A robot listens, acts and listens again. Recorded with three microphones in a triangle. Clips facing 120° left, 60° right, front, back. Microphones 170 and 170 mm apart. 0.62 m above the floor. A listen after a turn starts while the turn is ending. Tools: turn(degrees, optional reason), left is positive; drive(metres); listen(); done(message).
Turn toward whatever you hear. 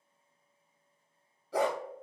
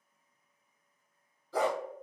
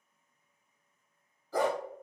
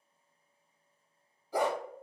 turn(degrees=105, reason="The dog barking: 105° left.")
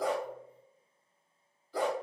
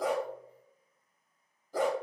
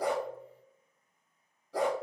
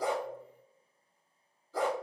turn(degrees=-15, reason="The dog barking is now 15° right.")
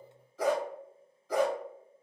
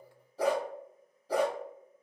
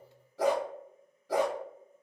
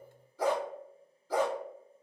done("Found it: a dog barking, straight ahead.")